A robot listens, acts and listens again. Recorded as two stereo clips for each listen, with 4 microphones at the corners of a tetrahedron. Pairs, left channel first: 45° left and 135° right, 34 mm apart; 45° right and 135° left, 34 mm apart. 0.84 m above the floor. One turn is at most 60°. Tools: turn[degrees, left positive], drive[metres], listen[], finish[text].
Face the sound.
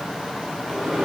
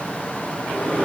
Thought: The microwave: 65° right.
Action: turn[-60]
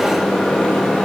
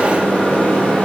Action: finish[Found it: a microwave, straight ahead.]